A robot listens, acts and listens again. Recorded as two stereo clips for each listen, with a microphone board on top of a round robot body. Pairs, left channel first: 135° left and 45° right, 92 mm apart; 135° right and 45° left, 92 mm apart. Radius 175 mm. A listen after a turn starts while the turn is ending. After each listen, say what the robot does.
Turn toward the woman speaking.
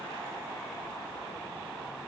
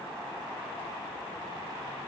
Keep listening.
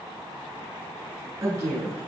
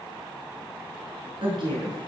Turn 15° left.
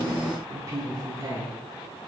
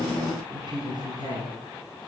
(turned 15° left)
Facing the woman speaking.